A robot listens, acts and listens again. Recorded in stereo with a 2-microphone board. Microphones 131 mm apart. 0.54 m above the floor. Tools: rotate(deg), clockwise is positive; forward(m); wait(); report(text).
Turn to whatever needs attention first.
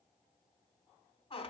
wait()
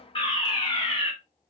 rotate(-40)
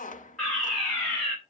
report("Facing the fire alarm.")